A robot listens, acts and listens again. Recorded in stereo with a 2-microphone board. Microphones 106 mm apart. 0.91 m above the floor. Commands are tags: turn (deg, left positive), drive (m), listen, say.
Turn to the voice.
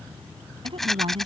<turn deg="-55"/>
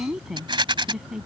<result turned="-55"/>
<say>Found it: a woman speaking, straight ahead.</say>